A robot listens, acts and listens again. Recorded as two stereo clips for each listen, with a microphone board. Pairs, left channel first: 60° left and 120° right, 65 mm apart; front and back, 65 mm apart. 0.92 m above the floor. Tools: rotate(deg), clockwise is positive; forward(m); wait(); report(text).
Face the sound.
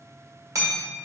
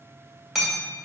rotate(95)
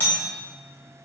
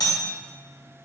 report("Found it: hammering, straight ahead, 2 to 4 m away.")